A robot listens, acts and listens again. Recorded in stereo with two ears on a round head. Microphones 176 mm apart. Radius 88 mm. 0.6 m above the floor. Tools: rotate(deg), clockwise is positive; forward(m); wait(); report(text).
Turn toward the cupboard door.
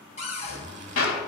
rotate(-35)
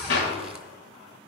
wait()
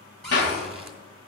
report("Facing the cupboard door, 2 to 4 m away.")